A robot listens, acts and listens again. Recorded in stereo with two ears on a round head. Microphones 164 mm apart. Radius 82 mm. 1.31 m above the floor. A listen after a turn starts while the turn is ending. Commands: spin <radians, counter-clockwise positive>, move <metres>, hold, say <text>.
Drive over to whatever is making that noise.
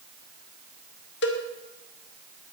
spin 1.22
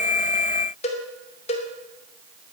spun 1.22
spin 0.61
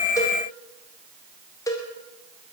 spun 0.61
spin 0.35
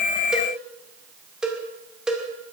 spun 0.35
move 1.0
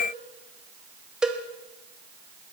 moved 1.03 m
move 1.0
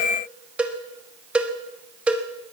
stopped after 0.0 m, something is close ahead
say Arrived at the cowbell, straight ahead.